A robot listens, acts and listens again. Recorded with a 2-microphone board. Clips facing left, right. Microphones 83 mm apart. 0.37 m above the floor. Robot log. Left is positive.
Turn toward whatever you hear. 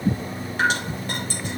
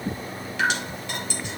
note: The dripping: about 40° left or 140° left.
cmd yaw +40
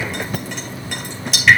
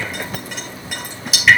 end: Facing the dripping.